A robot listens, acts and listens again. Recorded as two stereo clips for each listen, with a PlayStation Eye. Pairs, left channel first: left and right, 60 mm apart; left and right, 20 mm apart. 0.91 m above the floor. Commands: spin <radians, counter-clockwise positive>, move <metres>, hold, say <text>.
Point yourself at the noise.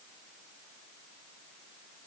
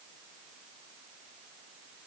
hold
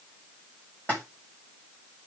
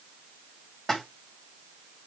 spin 0.44
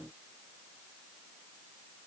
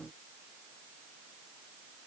hold
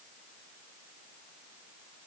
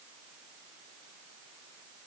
say I heard a splash, but can't make it out now. It was about straight ahead or 130° left.